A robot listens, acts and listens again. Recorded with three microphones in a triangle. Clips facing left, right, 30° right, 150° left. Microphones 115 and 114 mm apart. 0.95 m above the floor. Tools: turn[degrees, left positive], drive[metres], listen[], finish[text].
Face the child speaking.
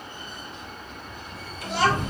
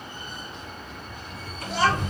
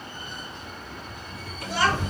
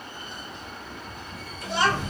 Thought: The child speaking: 80° left.
Action: turn[80]
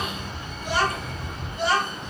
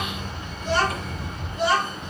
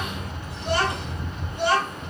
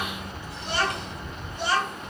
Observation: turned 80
Action: finish[Found it: a child speaking, straight ahead.]